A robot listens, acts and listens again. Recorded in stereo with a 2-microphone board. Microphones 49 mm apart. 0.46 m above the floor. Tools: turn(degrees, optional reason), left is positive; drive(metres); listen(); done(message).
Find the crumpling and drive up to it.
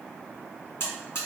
listen()
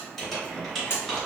turn(degrees=30)
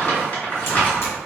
turn(degrees=140, reason="So it is at 140° left.")
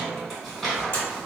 drive(metres=1.0)
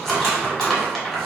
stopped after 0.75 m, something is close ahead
done("Arrived at the crumpling, straight ahead.")